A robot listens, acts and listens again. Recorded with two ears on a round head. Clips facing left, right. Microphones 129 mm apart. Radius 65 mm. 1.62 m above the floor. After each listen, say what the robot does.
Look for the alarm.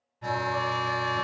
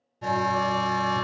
Turn 45° right.
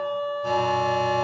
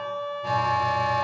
Turn 10° right.
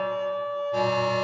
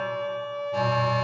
Facing the alarm, under 1 m away.